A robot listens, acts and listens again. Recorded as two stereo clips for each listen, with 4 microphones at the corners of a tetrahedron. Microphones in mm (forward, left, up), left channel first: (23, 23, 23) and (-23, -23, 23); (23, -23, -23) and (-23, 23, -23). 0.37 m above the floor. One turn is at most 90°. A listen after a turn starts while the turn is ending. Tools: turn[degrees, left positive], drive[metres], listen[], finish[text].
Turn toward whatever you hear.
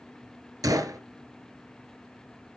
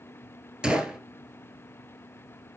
Thought: The gunshot: 150° right.
Action: turn[-90]
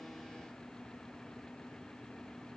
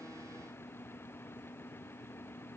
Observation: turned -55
Thought: Nothing new. It was at 95° right.
Action: turn[-90]
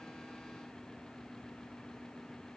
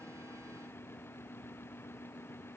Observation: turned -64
Thought: Nothing new. It was at 30° right.
Action: turn[-30]
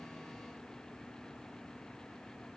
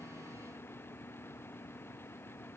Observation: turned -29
Action: finish[I heard a gunshot from this way, but can't make it out now.]